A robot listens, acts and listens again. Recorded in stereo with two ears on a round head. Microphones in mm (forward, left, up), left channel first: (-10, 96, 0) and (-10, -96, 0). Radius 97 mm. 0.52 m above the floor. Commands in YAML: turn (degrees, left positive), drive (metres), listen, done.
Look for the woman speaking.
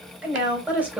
turn: -30
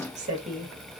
turn: -145
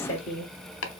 turn: 30
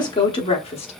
turn: 30
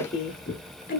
turn: 35
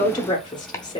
turn: 20
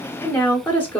turn: 10
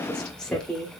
done: "Facing the woman speaking."